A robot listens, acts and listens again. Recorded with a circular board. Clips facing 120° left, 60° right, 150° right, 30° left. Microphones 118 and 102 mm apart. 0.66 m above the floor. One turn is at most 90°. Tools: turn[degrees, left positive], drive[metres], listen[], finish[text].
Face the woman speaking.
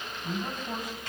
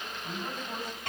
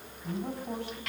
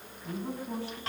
Thought: The woman speaking: 165° right.
Action: turn[-90]
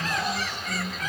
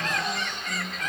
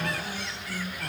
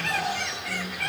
Thought: The woman speaking is now 95° right.
Action: turn[-90]
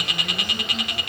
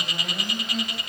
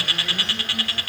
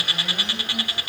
Action: listen[]
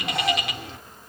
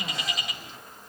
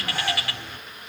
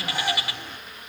Action: listen[]
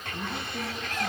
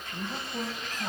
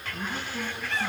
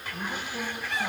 Thought: The woman speaking is now 10° right.
Action: turn[-10]
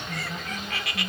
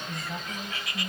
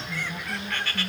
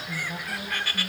Action: finish[Facing the woman speaking.]